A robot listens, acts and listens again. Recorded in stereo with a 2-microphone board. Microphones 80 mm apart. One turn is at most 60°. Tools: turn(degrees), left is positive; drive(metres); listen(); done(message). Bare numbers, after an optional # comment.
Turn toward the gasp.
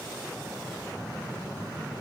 listen()
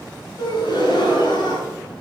# The gasp: about 65° left or 115° left.
turn(60)
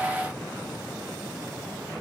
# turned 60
listen()
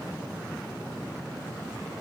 done("I heard a gasp, but can't make it out now. It was about 5° left or 55° left.")